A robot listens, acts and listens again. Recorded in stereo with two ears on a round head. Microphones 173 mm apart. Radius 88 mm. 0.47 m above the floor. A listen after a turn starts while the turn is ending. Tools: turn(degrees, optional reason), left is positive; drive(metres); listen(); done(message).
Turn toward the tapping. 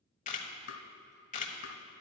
turn(degrees=55, reason="The tapping: about 55° left or 125° left.")
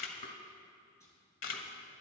listen()
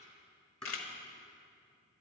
done("Found it: tapping, straight ahead, 1 to 2 m away.")